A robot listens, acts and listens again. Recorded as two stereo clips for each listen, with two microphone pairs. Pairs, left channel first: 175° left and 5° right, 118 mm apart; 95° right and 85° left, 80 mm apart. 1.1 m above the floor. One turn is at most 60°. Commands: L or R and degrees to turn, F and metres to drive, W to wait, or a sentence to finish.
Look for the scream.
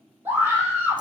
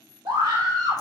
L60
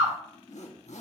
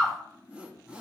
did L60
Facing the scream, 2 to 4 m away.